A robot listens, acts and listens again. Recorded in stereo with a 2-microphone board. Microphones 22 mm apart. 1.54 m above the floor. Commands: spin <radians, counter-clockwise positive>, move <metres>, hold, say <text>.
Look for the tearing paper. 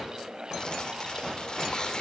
spin 0.70
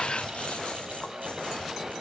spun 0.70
hold
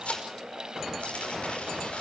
spin 1.75
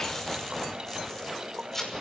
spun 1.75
spin 0.26
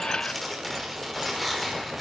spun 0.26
say Found it: tearing paper, straight ahead.